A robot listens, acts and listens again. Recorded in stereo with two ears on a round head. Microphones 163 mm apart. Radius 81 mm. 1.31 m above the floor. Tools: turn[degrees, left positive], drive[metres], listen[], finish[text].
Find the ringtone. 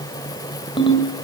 Thought: The ringtone: about 25° left or 155° left.
Action: turn[25]
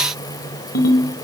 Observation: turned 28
Thought: So it is at 125° left.
Action: turn[125]
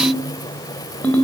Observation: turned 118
Thought: The ringtone is now 10° left.
Action: turn[10]
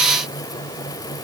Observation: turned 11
Action: listen[]
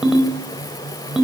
Action: finish[Facing the ringtone, over 4 m away.]